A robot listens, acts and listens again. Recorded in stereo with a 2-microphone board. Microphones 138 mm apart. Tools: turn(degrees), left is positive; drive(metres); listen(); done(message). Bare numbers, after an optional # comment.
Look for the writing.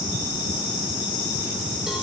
listen()
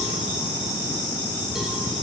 listen()
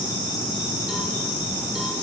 done("I can't make out writing.")